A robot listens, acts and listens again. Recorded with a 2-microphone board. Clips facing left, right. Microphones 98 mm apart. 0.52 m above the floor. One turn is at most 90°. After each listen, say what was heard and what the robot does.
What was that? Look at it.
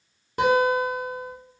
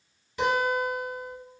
The guitar: about 55° left or 125° left. Turn 55° left.
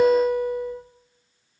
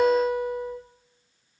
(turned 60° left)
Found it: a guitar, straight ahead.